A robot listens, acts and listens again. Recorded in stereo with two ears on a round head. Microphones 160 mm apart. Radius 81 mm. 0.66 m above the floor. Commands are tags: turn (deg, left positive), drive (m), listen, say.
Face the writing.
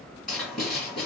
<turn deg="30"/>
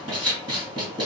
<turn deg="-25"/>
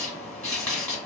<turn deg="10"/>
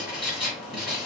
<say>Found it: writing, straight ahead.</say>